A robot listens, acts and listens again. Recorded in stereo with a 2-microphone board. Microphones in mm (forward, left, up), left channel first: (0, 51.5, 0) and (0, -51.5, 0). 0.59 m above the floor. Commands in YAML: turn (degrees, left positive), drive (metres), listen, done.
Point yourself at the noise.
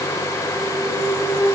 turn: -55
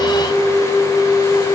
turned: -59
done: "Facing the flute, over 4 m away."